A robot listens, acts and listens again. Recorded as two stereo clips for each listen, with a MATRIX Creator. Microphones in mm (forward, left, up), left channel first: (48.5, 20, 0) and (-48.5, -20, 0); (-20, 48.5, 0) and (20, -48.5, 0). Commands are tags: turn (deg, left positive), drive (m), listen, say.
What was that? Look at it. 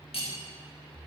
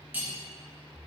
<say>Facing the cutlery clinking, 1 to 2 m away.</say>